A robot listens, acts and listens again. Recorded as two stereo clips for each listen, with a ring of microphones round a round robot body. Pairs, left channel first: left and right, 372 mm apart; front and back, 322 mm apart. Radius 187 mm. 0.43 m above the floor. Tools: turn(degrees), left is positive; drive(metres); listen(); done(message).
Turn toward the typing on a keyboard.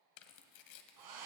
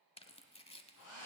listen()
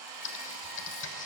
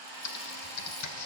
turn(degrees=35)
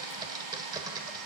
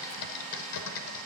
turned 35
turn(degrees=-10)
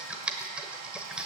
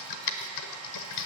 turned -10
done("Facing the typing on a keyboard.")